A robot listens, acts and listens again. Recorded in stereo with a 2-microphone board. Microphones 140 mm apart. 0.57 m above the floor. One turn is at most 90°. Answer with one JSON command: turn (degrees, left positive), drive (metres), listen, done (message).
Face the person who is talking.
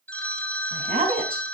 {"turn": -75}
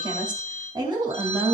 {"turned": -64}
{"turn": -35}
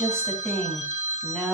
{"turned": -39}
{"done": "Facing the woman speaking, 2 to 4 m away."}